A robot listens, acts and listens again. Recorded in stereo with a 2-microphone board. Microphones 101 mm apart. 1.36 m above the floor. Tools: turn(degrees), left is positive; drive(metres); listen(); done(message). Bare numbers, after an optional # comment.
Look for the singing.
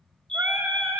# The singing: about 20° right or 160° right.
turn(-20)
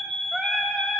done("Facing the singing.")